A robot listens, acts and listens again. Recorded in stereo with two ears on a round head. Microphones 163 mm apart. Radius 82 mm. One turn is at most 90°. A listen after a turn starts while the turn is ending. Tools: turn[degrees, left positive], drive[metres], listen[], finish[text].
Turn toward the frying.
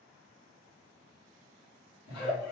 Action: listen[]
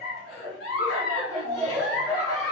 Action: listen[]
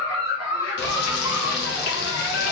Thought: The frying: about 60° left or 120° left.
Action: turn[60]
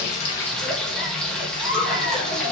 Action: finish[Found it: frying, straight ahead.]